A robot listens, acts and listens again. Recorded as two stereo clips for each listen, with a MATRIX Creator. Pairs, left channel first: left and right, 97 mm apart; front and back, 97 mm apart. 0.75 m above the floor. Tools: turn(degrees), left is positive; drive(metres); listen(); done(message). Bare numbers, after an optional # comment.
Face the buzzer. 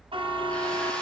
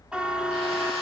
# The buzzer: 100° right.
turn(-100)
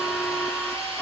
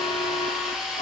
done("Found it: a buzzer, straight ahead, 1 to 2 m away.")